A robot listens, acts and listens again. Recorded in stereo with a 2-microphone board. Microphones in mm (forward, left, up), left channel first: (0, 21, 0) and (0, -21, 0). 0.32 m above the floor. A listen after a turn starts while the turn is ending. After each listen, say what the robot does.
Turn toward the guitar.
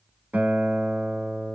Turn 45° right.
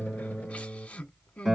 Facing the guitar.